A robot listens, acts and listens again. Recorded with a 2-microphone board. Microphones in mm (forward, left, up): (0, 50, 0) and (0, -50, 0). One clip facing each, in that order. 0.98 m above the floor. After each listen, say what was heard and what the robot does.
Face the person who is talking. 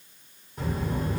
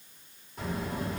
Turn 30° left.
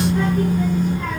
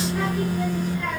So it is at 145° left. Turn 145° left.
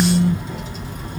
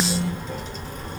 Facing the child speaking, 1 to 2 m away.